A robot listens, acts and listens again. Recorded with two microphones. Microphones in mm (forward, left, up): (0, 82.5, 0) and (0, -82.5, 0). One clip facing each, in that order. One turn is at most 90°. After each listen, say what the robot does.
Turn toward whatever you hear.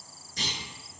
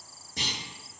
Turn 55° right.
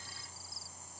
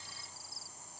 Keep listening.
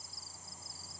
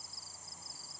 I heard a clunk, but can't make it out now. It was about straight ahead or 70° right.